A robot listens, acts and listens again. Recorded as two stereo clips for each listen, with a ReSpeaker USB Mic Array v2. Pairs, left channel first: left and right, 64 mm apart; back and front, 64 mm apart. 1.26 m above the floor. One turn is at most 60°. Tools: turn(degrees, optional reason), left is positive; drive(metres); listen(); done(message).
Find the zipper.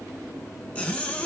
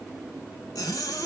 turn(degrees=60, reason="The zipper: 160° left.")
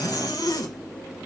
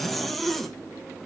turn(degrees=60, reason="The zipper is now 95° left.")
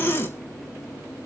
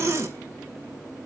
turn(degrees=40, reason="The zipper is now 40° left.")
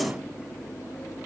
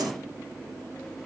listen()
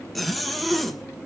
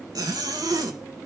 done("Facing the zipper.")